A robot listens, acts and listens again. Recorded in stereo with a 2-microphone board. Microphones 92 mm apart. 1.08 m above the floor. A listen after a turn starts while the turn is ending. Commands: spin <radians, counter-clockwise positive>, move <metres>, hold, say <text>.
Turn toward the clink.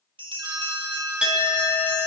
spin -0.52
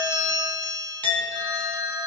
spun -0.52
spin 0.26
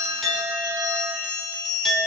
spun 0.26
say Found it: a clink, straight ahead, 2 to 4 m away.